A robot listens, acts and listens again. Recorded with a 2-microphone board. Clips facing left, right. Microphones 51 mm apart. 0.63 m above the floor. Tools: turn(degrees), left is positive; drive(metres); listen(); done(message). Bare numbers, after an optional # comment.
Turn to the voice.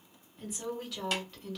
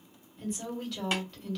turn(30)
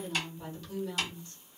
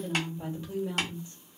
# So it is at 25° right.
turn(-25)
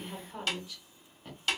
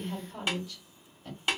# The woman speaking is now 15° left.
turn(15)
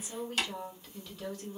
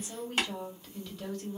done("Found it: a woman speaking, straight ahead, 1 to 2 m away.")